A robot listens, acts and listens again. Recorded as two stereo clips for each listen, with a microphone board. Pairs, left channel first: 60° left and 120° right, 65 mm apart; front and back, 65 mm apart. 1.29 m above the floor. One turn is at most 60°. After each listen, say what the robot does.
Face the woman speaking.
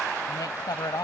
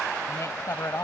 Turn 40° left.
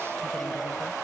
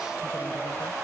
Keep listening.
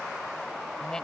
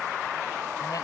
Keep listening.
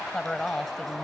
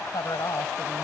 Turn 20° right.
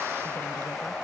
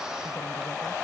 Keep listening.
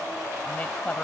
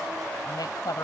Turn 10° right.
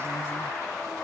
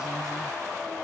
Keep listening.
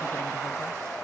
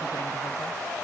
Keep listening.
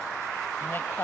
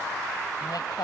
Found it: a woman speaking, straight ahead.